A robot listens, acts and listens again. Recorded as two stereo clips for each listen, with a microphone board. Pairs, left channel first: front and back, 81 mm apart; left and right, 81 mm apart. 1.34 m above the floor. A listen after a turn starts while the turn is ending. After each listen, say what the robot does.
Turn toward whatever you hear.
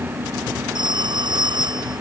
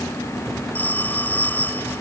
Turn 160° left.
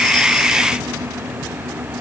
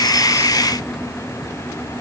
Keep listening.
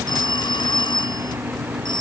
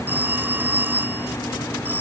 Turn 25° right.
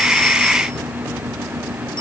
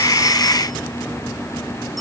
Keep listening.
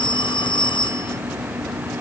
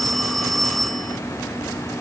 Found it: a phone ringing, straight ahead.